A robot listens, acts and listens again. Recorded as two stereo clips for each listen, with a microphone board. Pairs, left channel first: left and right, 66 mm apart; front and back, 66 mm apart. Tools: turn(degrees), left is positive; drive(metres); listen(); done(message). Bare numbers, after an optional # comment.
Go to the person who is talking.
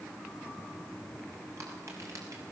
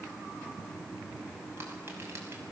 listen()
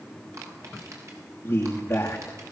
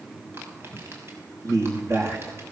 # The man speaking: 145° left.
turn(145)
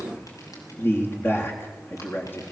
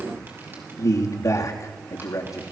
# The man speaking is now 35° left.
turn(35)
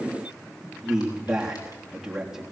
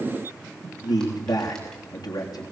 drive(1.0)
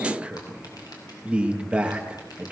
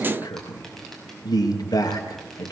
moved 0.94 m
# The man speaking is now 15° right.
turn(-15)
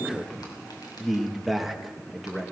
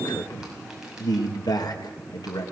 drive(1.0)
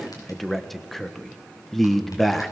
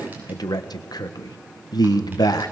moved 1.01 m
drive(1.0)
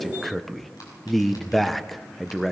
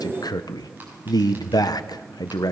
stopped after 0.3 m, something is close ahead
done("I am next to the man speaking.")